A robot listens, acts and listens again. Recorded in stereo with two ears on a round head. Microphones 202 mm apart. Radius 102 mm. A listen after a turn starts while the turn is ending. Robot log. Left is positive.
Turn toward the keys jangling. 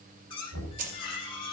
note: The keys jangling: about 35° right or 145° right.
cmd yaw -35
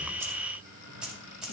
end: Facing the keys jangling, 2 to 4 m away.